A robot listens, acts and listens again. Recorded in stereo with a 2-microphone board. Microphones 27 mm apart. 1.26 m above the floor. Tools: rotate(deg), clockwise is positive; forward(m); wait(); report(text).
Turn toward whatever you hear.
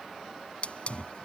rotate(-45)
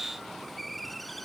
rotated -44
report("Found it: a hiss, straight ahead.")